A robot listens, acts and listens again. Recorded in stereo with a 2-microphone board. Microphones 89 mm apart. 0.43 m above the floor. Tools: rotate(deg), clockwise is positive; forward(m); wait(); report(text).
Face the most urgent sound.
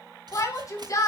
rotate(-40)
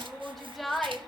report("Facing the shout.")